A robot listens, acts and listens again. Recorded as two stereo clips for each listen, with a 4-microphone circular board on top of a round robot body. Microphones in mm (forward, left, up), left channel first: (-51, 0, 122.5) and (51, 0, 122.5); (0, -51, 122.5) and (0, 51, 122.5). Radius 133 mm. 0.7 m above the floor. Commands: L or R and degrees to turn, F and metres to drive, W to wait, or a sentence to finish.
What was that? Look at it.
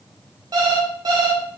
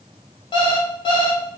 R50
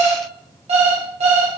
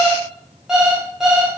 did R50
Facing the alarm clock, under 1 m away.